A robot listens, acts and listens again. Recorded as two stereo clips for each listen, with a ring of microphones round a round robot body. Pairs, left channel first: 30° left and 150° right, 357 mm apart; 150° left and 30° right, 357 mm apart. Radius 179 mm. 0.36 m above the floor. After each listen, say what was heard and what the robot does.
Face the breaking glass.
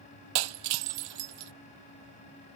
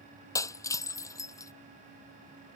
The breaking glass: 130° right. Turn 130° right.
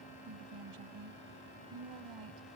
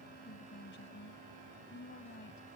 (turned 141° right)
Nothing new. It was at 10° left. Turn 10° left.
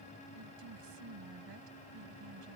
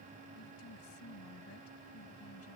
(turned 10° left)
I heard breaking glass from this way, but can't make it out now.